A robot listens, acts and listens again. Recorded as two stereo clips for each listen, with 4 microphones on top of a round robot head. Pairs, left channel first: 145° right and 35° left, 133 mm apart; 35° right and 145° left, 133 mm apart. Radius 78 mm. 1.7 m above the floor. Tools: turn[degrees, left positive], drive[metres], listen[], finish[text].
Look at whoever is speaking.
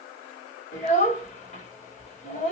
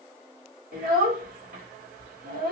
Thought: The child speaking: 175° left.
Action: turn[175]
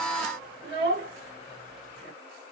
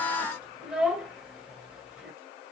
Thought: The child speaking is now 60° left.
Action: turn[60]
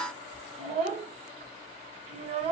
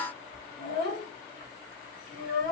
Thought: The child speaking is now 10° right.
Action: turn[-10]
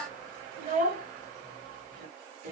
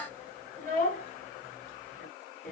Action: finish[Facing the child speaking, 1 to 2 m away.]